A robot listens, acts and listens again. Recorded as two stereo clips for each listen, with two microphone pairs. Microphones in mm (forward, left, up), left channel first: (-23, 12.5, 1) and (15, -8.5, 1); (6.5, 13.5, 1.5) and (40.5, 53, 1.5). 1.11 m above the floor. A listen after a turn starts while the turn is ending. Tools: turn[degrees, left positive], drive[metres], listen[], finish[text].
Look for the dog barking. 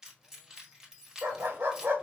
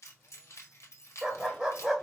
Thought: The dog barking: 30° right.
Action: turn[-30]
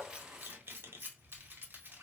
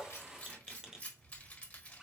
Action: listen[]
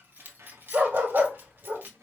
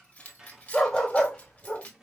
Thought: The dog barking is now 60° right.
Action: turn[-60]
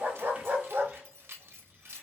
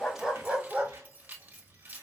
Thought: The dog barking is now 15° right.
Action: turn[-15]
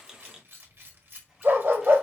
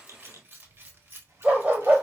Action: finish[Facing the dog barking.]